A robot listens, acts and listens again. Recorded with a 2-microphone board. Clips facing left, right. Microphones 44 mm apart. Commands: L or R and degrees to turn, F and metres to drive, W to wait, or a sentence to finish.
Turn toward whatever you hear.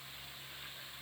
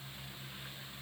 W
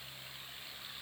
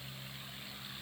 W
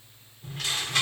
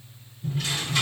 L60
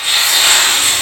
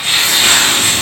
Facing the tearing paper.